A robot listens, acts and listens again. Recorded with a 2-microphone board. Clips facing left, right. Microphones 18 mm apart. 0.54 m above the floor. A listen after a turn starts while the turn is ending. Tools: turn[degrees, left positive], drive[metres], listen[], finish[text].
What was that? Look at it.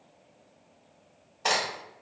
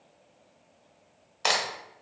Thought: The crack: about 55° right or 125° right.
Action: turn[-55]
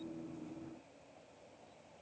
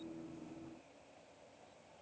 Action: listen[]
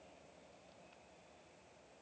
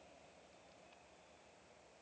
Action: finish[I heard a crack, but can't make it out now. It was about straight ahead or 70° right.]